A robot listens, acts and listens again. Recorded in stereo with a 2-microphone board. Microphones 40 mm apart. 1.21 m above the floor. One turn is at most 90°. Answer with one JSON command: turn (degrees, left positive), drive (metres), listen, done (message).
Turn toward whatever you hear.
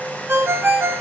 {"turn": -90}
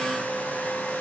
{"listen": true}
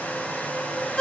{"turn": 15}
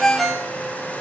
{"done": "Facing the ringtone."}